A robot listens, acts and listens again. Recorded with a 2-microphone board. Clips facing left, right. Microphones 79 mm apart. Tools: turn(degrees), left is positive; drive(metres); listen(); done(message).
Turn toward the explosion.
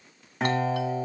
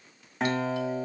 listen()
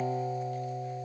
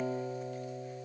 listen()
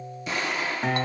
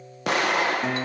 turn(degrees=-70)
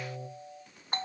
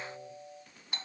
listen()
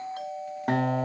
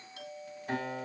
done("I heard an explosion, but can't make it out now. It was about straight ahead or 40° right.")